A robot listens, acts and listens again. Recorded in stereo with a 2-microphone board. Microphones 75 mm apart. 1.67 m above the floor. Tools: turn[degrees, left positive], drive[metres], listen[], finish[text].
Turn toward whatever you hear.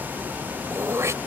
Thought: The throat clearing: about 40° right or 140° right.
Action: turn[-40]
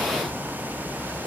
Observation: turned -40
Action: listen[]
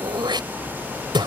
Thought: So it is at 100° right.
Action: turn[-100]
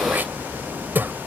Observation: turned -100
Thought: The throat clearing is now 25° right.
Action: turn[-25]
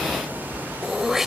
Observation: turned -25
Action: finish[Facing the throat clearing.]